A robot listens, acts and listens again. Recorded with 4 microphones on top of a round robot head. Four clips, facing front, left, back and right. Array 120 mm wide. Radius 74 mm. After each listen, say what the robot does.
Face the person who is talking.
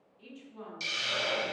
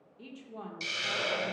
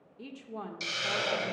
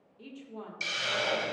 Turn 180° left.
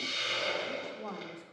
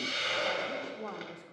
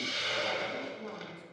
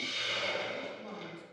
Turn 50° left.
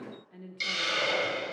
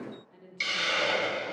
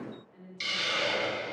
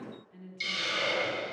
Turn 20° left.
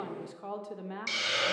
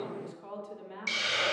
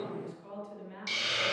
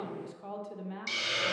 Found it: a woman speaking, straight ahead, under 1 m away.